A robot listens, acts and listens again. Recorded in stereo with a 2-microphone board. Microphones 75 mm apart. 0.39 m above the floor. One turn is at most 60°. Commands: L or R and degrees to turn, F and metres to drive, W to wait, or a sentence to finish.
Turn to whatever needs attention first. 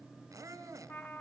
W
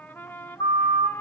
L60
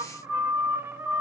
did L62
L25
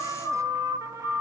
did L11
L20
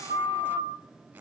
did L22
Found it: a siren, straight ahead.